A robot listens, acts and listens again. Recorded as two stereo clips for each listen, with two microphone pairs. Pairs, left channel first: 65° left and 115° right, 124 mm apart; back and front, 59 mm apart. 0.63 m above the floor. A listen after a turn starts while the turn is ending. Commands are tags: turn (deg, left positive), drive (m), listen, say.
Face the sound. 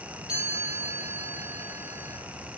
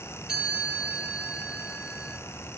<turn deg="-75"/>
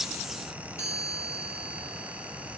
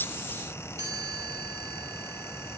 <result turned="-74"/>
<say>Facing the chime, over 4 m away.</say>